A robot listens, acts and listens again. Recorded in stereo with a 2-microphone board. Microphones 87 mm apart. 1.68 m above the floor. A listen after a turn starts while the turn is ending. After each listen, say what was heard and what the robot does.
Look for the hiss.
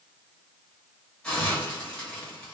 Turn 30° left.
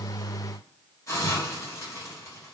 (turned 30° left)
So it is at 140° left. Turn 140° left.
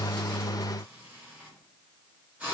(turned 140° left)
The hiss is now 20° right. Turn 20° right.
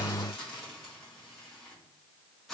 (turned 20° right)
Found it: a hiss, straight ahead, 1 to 2 m away.